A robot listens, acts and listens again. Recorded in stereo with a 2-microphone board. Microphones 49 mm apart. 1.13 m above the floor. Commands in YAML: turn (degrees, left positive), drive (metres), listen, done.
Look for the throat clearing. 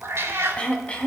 turn: 25
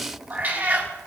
listen: true
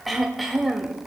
done: "Found it: throat clearing, straight ahead, 1 to 2 m away."